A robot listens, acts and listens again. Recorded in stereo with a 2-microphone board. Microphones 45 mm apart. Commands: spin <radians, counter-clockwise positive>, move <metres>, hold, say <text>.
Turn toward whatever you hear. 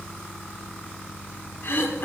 spin 1.05
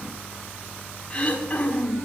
spin 0.61
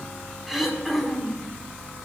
say Found it: throat clearing, straight ahead, 1 to 2 m away.